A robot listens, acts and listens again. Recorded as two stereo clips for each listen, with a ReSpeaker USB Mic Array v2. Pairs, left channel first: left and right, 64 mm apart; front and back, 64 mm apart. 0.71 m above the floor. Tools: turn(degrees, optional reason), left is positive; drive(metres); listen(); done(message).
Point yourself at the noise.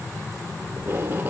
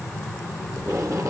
turn(degrees=-150, reason="The tape being pulled: 150° right.")
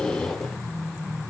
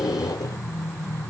done("Found it: tape being pulled, straight ahead.")